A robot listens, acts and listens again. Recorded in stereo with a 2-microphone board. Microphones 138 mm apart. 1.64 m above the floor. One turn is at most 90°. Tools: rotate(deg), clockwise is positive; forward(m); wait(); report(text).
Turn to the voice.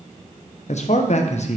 rotate(-55)
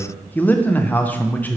rotate(-15)
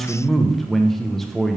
report("Found it: a man speaking, straight ahead, under 1 m away.")